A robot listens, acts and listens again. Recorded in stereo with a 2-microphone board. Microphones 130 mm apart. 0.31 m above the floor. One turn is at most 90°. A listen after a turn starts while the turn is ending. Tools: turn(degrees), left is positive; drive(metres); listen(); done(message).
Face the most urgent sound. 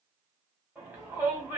turn(degrees=-15)
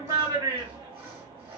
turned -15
turn(degrees=-90)
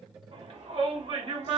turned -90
turn(degrees=-55)
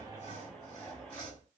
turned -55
listen()
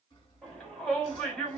done("Facing the shout, 2 to 4 m away.")